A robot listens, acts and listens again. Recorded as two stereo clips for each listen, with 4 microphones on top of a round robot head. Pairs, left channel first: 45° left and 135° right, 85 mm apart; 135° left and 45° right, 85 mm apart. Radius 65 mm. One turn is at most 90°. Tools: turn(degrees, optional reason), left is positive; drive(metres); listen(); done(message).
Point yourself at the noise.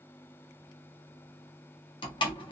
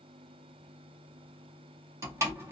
turn(degrees=15, reason="The door slam: 15° left.")
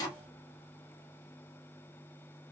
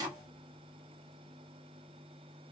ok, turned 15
done("Found it: a door slam, straight ahead.")